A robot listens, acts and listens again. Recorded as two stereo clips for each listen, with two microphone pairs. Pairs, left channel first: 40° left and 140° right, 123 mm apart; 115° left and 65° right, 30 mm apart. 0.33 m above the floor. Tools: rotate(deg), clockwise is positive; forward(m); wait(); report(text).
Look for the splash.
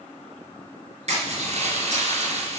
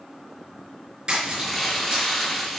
rotate(120)
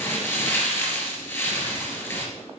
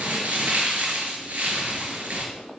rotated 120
report("Facing where the splash came from. I can't hear it now.")